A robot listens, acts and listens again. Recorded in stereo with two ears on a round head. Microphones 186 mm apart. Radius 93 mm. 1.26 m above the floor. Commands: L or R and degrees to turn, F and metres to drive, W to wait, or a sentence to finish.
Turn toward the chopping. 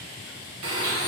W
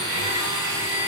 W
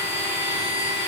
I can't make out chopping to turn to.